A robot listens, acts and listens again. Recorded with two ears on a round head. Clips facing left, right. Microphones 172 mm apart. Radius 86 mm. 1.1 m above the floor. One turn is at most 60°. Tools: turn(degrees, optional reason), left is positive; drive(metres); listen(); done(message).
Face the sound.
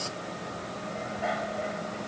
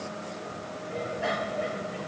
turn(degrees=-55, reason="The bicycle bell: about 55° right or 125° right.")
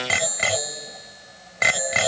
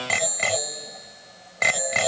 done("Found it: a bicycle bell, straight ahead.")